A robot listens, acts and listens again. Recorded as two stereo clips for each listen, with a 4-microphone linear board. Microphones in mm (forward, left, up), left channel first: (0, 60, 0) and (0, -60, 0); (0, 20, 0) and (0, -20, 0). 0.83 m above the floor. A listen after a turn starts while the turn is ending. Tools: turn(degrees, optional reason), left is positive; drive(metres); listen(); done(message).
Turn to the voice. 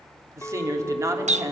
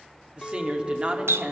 turn(degrees=-25, reason="The woman speaking: about 25° right or 155° right.")
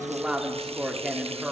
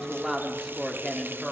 done("Found it: a woman speaking, straight ahead, 2 to 4 m away.")